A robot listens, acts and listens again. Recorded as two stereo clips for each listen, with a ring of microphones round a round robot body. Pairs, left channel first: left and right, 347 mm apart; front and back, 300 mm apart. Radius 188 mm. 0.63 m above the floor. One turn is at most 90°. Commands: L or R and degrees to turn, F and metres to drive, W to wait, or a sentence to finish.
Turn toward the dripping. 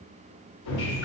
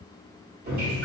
L90
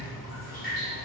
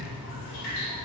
L25
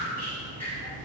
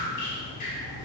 Facing the dripping.